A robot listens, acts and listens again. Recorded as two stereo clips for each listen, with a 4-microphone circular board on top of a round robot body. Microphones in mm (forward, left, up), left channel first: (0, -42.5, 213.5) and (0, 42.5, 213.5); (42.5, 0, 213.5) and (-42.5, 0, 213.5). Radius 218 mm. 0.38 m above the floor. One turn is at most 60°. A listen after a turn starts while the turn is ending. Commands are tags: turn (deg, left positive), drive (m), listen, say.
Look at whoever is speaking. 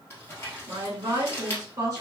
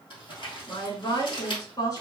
<turn deg="35"/>
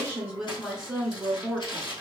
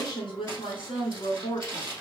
<say>Found it: a woman speaking, straight ahead.</say>